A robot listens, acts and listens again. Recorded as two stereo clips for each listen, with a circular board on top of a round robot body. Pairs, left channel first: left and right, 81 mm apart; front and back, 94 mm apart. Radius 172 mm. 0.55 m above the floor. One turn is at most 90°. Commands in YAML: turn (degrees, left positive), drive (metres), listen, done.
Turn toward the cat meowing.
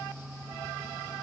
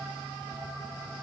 listen: true
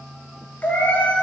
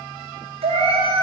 turn: 90
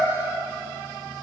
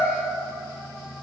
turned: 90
turn: 75
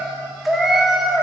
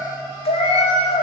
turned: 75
done: "Facing the cat meowing."